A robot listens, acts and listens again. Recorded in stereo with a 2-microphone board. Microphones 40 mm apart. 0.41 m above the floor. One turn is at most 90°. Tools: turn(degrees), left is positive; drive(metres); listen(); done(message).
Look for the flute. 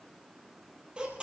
listen()
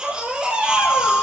turn(degrees=50)
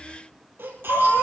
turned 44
turn(degrees=85)
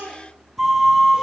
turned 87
done("Facing the flute, 2 to 4 m away.")